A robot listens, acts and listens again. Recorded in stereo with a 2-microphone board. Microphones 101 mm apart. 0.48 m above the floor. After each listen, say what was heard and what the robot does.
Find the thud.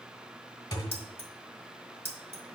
The thud: about 50° left or 130° left. Turn 50° left.
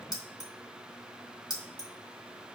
Keep listening.
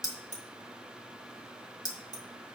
I heard a thud, but can't make it out now. It was about straight ahead or 80° left.